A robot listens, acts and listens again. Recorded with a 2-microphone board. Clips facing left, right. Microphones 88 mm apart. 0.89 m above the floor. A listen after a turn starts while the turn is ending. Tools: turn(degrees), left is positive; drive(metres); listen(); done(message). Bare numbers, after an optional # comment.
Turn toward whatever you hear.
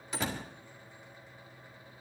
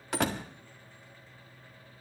# The door slam: about 65° right or 115° right.
turn(-65)
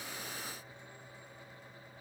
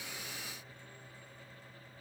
listen()
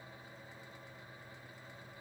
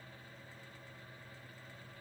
done("I heard a door slam, but can't make it out now. It was about straight ahead or 50° right.")